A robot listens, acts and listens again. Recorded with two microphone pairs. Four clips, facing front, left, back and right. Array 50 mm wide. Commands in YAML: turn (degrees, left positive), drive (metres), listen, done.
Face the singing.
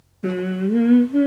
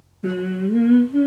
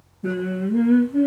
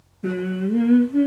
turn: 10
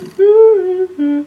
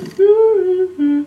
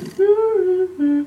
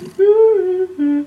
done: "Found it: singing, straight ahead."